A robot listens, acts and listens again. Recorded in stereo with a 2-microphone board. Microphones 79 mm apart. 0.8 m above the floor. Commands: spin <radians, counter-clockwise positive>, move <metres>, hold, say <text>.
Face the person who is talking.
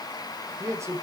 spin -0.61
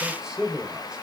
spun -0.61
spin -0.17
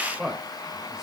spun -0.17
say Found it: a man speaking, straight ahead.